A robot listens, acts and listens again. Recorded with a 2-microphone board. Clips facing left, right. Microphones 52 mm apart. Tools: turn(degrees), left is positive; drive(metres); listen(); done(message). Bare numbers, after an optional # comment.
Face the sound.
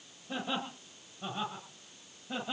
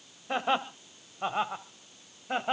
# The laughter: about 50° right or 130° right.
turn(-50)
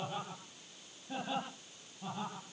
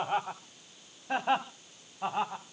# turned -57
# So it is at 70° right.
turn(-70)
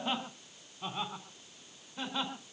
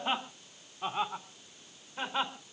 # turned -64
# The laughter is now 25° right.
turn(-25)
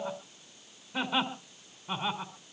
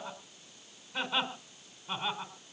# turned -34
# The laughter is now 10° left.
turn(10)
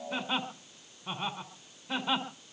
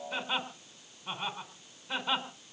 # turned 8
done("Found it: laughter, straight ahead, 2 to 4 m away.")